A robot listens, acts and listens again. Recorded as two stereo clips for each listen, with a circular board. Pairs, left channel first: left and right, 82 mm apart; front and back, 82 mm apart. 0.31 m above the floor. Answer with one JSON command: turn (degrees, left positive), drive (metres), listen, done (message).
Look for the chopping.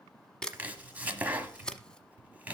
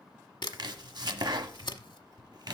{"turn": -160}
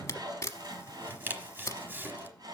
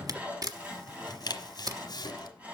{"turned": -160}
{"turn": -30}
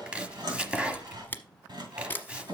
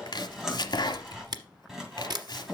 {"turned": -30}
{"turn": -15}
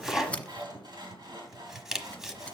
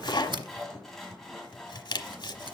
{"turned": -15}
{"done": "Facing the chopping, 1 to 2 m away."}